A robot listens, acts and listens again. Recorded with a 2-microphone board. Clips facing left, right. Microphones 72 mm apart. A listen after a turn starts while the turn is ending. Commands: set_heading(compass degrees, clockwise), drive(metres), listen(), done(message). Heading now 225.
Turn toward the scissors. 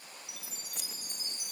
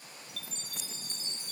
set_heading(135)
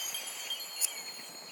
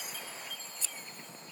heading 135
set_heading(125)
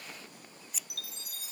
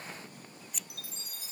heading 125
done("Facing the scissors.")